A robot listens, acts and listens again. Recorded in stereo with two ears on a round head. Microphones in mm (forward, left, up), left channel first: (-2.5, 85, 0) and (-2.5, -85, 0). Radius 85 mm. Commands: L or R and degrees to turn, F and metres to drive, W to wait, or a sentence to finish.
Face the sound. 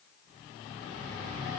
W
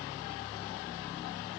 W
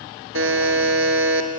R90
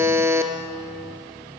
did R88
R15
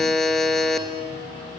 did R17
Found it: a buzzer, straight ahead.